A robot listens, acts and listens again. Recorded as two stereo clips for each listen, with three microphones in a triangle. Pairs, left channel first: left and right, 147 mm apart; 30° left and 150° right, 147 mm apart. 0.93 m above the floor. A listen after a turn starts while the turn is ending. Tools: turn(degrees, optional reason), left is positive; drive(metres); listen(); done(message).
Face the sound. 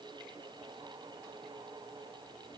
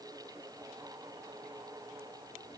listen()
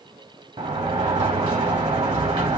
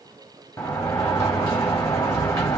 turn(degrees=-40, reason="The sliding door: 40° right.")
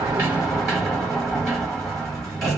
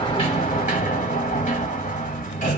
done("Found it: a sliding door, straight ahead.")